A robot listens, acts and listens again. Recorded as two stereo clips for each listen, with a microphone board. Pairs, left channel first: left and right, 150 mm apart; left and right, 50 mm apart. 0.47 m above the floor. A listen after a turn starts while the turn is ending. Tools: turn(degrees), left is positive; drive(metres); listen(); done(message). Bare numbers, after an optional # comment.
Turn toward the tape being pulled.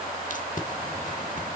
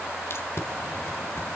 # The tape being pulled: about 60° left or 120° left.
turn(60)
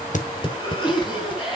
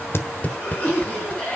# So it is at 40° left.
turn(40)
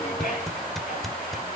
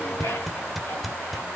done("Facing the tape being pulled.")